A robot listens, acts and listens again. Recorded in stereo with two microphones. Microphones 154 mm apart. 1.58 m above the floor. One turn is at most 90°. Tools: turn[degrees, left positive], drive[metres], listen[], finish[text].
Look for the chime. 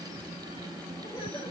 Action: listen[]
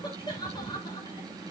Action: listen[]
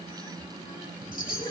Thought: The chime: about 65° left or 115° left.
Action: turn[65]
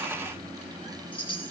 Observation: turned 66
Thought: So it is at 35° left.
Action: turn[35]
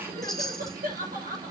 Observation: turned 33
Action: finish[Facing the chime, 2 to 4 m away.]